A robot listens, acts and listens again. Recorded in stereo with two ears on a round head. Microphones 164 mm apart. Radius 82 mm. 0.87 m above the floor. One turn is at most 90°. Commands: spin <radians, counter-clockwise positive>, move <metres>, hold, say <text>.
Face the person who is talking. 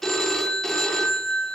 hold
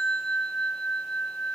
hold
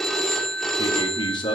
spin 0.44
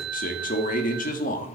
spin 1.57
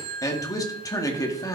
spin 0.35
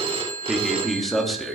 say Found it: a man speaking, straight ahead, 1 to 2 m away.